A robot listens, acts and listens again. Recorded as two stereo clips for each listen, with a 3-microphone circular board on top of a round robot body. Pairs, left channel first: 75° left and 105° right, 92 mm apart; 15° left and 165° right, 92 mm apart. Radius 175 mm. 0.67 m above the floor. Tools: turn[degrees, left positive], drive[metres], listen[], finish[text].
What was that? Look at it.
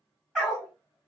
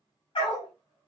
Thought: The dog barking: 10° right.
Action: turn[-10]
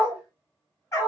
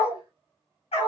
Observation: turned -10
Thought: The dog barking is now 20° left.
Action: turn[20]
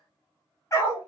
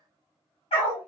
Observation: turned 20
Thought: The dog barking is now 20° left.
Action: turn[20]
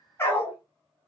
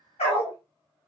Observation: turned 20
Thought: The dog barking is now 15° left.
Action: turn[15]
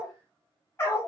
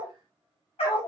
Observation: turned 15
Thought: The dog barking is now 15° left.
Action: turn[15]
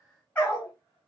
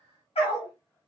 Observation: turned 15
Action: finish[Facing the dog barking.]